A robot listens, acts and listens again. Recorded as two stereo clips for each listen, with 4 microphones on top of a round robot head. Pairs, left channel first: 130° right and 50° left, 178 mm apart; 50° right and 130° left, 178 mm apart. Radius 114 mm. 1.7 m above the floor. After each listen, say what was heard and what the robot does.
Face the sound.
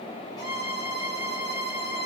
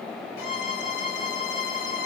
The violin: 60° right. Turn 60° right.
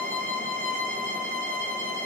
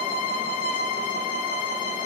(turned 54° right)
Found it: a violin, straight ahead, 1 to 2 m away.